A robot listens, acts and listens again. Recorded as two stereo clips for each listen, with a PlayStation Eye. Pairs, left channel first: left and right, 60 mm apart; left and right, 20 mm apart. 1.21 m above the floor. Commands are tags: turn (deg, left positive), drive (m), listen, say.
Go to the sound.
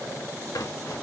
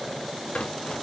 <turn deg="90"/>
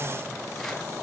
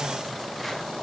<listen/>
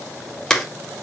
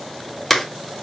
<turn deg="10"/>
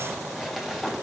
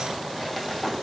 <drive m="1.0"/>
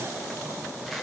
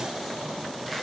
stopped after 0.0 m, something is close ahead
<listen/>
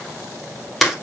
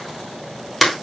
<say>Something is in my way. I am facing the crumpling but have not reached it.</say>